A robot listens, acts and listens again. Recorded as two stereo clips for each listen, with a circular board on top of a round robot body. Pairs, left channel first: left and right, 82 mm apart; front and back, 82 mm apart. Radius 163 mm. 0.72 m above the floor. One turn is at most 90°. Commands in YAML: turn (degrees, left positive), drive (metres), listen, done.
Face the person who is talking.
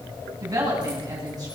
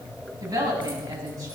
turn: -90
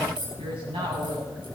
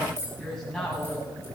turn: -85
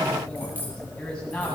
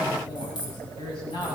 turn: 10
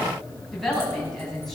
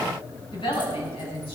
done: "Facing the woman speaking, over 4 m away."